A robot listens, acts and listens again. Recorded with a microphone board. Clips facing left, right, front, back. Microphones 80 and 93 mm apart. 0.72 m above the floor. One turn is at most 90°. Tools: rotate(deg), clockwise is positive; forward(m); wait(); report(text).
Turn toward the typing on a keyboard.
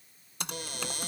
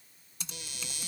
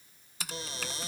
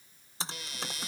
rotate(-90)
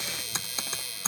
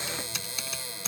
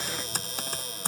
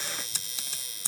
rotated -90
rotate(-35)
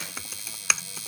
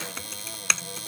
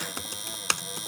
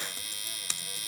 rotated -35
report("Found it: typing on a keyboard, straight ahead.")